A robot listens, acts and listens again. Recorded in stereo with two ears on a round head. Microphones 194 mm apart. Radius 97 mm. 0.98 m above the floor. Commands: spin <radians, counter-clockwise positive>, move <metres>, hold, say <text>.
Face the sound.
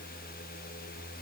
hold
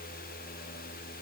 hold
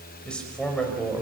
spin 0.52
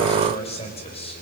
spin 2.62
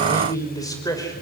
spin 0.26
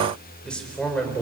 say Facing the man speaking, over 4 m away.